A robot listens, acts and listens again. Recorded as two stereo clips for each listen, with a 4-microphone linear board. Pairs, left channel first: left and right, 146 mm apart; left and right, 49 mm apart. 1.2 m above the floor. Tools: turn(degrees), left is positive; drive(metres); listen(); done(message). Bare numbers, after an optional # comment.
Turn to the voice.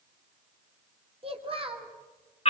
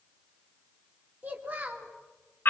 # The child speaking: about 40° right or 140° right.
turn(-40)
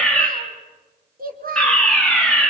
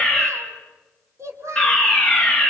# So it is at 100° right.
turn(-100)
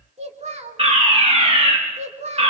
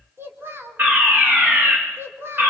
# The child speaking is now 50° right.
turn(-50)
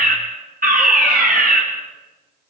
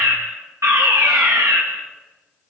listen()
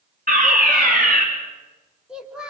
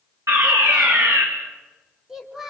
done("Facing the child speaking.")